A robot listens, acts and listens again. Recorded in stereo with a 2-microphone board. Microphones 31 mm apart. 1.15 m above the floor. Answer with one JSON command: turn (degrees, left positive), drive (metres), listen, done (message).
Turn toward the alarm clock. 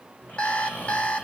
{"turn": 40}
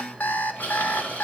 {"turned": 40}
{"turn": 100}
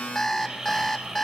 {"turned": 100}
{"turn": 15}
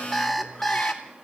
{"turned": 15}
{"done": "Found it: an alarm clock, straight ahead."}